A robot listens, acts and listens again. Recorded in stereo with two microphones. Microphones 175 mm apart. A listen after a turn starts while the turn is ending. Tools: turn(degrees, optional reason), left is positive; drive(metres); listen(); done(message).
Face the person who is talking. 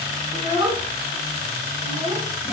turn(degrees=-15, reason="The child speaking: about 15° right or 165° right.")
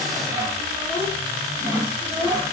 listen()
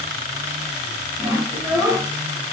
done("Facing the child speaking, 2 to 4 m away.")